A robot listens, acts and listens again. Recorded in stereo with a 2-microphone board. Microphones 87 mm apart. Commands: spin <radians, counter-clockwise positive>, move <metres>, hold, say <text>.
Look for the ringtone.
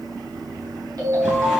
spin -0.87
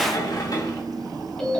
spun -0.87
spin 0.17
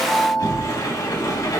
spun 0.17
say Facing the ringtone, over 4 m away.